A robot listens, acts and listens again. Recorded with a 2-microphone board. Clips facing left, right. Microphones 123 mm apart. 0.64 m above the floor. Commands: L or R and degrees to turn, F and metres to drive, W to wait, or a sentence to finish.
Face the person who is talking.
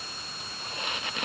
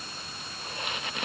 W
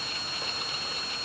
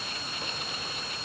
W
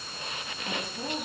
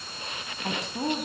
R90
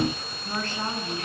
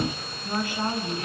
R10
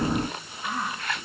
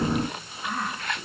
Facing the woman speaking, over 4 m away.